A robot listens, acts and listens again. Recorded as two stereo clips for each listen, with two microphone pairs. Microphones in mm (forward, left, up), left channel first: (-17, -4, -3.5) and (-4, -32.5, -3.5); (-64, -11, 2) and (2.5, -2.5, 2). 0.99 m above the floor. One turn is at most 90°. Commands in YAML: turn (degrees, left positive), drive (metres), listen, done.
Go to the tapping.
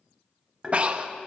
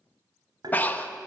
drive: 1.0
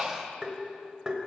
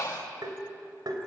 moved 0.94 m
drive: 1.0
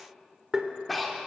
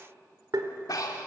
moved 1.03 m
drive: 1.0
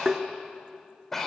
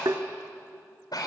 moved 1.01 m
turn: 15
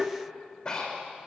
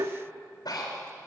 drive: 1.0
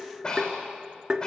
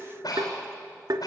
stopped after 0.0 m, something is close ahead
done: "Arrived at the tapping, straight ahead."